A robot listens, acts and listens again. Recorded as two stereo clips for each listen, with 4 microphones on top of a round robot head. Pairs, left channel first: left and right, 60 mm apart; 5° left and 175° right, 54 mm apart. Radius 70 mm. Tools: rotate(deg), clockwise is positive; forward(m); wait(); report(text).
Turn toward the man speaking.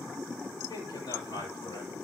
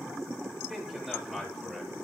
rotate(-105)
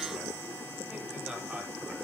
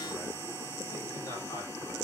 rotate(10)
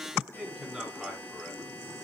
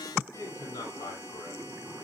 report("Facing the man speaking.")